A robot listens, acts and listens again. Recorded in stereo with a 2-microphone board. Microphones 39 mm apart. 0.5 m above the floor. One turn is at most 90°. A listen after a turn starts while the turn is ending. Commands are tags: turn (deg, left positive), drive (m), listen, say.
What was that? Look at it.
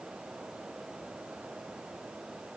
<listen/>
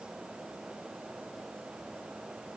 <listen/>
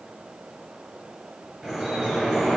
<turn deg="-30"/>
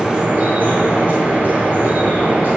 <turn deg="-90"/>
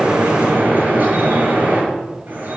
<turn deg="-55"/>
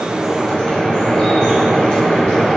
<turn deg="15"/>
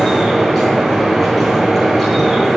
<say>Found it: dripping, straight ahead, over 4 m away.</say>